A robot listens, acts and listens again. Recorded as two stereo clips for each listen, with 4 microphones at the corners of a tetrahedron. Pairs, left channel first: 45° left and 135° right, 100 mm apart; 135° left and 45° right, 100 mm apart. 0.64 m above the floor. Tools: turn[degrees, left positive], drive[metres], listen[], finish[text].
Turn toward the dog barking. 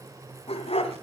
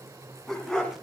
Thought: The dog barking: 50° left.
Action: turn[50]
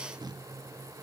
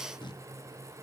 Action: listen[]
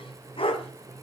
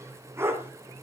Thought: The dog barking is now 20° left.
Action: turn[20]
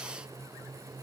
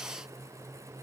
Action: listen[]
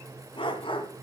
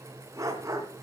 Thought: The dog barking is now 15° left.
Action: turn[15]
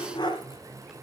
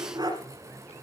Action: finish[Found it: a dog barking, straight ahead.]